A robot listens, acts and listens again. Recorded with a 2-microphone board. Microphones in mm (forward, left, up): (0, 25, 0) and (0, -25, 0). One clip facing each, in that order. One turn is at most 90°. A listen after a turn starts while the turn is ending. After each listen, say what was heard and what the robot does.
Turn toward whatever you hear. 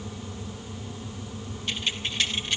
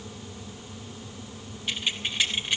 Turn 30° right.
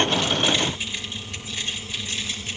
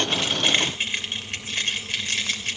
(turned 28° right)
So it is at 115° right. Turn 90° right.
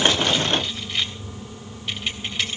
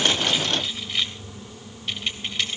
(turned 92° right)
Found it: keys jangling, straight ahead.